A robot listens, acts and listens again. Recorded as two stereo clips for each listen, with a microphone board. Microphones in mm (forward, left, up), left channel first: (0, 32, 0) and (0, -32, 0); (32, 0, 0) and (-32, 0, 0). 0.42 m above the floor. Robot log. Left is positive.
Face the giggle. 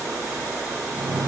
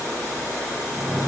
cmd idle
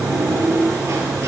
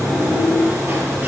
cmd idle
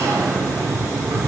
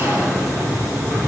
end: I can't make out a giggle to turn to.